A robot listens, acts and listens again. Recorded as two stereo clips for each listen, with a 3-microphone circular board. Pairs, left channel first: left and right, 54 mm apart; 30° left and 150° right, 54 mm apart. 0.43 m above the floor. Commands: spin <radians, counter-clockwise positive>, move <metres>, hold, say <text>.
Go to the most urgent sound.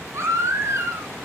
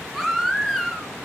spin -1.05
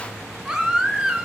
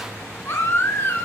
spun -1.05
spin -0.17
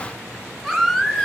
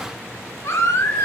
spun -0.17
move 1.0
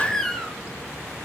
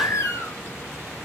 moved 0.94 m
spin 0.17
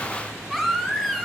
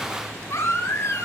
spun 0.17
move 1.0
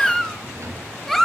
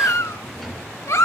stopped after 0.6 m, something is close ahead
say Arrived at the baby crying, straight ahead.